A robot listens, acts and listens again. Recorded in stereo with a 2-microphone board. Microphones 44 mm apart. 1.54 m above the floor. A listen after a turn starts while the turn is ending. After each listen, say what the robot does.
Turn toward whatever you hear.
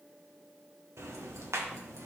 Turn 90° right.
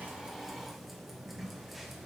Found it: ticking, straight ahead, 1 to 2 m away.